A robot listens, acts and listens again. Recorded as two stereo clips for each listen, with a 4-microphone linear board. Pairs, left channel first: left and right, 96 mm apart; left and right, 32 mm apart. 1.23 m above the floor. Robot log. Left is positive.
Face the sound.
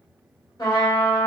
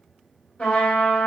note: The trumpet: about 45° left or 135° left.
cmd yaw +45
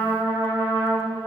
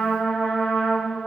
note: So it is at 90° left.
cmd yaw +90
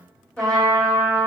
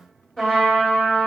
note: The trumpet is now 15° left.
cmd yaw +15
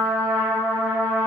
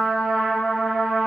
note: The trumpet is now 10° left.
cmd yaw +10
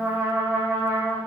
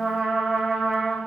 end: Facing the trumpet, 1 to 2 m away.